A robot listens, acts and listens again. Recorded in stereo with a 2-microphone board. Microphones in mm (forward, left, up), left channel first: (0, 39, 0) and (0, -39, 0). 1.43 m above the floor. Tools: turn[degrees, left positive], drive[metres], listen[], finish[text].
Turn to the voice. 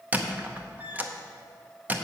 Action: listen[]
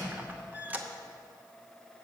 Action: listen[]
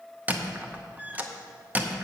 Action: finish[I can't make out anyone speaking, only a squeak.]